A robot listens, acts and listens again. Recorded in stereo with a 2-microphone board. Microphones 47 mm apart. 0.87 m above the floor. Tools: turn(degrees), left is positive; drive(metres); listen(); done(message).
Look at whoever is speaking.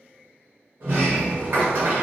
listen()
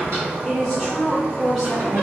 turn(degrees=30)
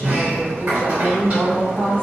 turn(degrees=150)
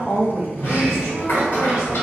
done("Found it: a woman speaking, straight ahead.")